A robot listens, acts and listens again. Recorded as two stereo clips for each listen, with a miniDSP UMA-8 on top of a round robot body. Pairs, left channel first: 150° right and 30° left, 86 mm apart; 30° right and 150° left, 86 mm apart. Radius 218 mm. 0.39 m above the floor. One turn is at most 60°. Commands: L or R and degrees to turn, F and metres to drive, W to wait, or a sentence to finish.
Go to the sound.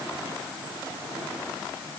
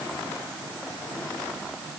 W
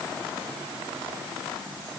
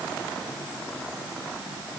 W
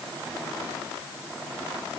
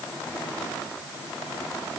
I can't make out anything to turn to.